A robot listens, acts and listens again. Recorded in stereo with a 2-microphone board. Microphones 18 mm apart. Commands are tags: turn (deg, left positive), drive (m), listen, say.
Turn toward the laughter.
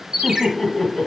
<turn deg="40"/>
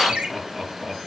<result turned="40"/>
<say>Facing the laughter, 2 to 4 m away.</say>